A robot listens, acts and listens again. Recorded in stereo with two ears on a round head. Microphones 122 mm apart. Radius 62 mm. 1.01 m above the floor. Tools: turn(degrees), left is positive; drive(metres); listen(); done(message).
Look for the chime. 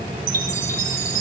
turn(degrees=-75)
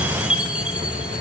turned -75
turn(degrees=-10)
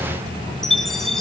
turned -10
done("Found it: a chime, straight ahead.")